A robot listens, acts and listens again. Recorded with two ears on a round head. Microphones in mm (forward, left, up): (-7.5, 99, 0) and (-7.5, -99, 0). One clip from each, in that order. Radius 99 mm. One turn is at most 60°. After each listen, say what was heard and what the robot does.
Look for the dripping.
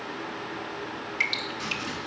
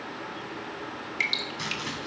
Turn 30° right.
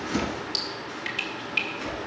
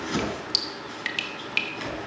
So it is at 140° right. Turn 60° right.
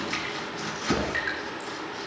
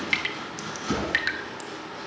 The dripping is now 80° right. Turn 60° right.
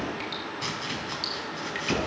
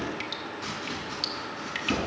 Nothing new. It was at 20° right. Turn 20° right.
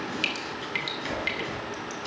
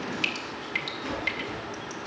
Found it: dripping, straight ahead, 1 to 2 m away.